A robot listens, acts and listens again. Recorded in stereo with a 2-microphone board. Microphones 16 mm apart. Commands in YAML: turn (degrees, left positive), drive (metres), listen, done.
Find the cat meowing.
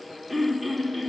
listen: true
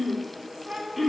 turn: -70
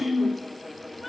done: "Found it: a cat meowing, straight ahead, 2 to 4 m away."